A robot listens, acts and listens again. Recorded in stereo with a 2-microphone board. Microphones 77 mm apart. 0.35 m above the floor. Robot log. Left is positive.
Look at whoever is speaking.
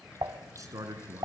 note: The man speaking: about 45° right or 135° right.
cmd yaw -45
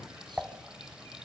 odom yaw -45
cmd idle
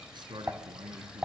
note: So it is at 85° right.
cmd yaw -85
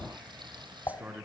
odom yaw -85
note: The man speaking is now 20° right.
cmd yaw -20
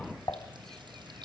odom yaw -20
cmd idle
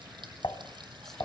cmd idle
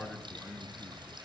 end: Facing the man speaking, over 4 m away.